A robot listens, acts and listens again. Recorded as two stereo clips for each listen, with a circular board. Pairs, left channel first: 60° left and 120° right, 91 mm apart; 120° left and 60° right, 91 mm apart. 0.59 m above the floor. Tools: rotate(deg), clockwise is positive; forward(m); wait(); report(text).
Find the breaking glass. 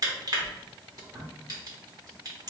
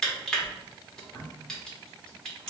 wait()
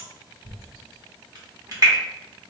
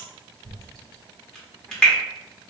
wait()
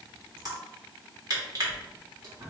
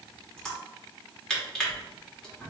report("I can't make out breaking glass to turn to.")